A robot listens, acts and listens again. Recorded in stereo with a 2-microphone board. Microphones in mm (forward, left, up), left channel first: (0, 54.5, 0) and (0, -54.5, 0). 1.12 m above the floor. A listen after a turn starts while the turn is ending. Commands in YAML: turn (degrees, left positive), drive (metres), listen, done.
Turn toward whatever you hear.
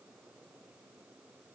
listen: true
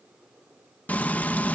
turn: 30
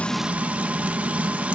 turn: -15
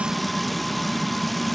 done: "Facing the frying."